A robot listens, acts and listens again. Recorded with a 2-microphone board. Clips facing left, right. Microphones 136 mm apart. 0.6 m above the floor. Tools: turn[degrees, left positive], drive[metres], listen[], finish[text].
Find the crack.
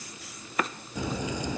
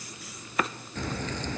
Action: turn[30]
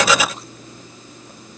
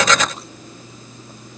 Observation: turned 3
Action: listen[]
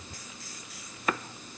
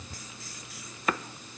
Action: finish[I heard a crack, but can't make it out now. It was about 10° left or 165° left.]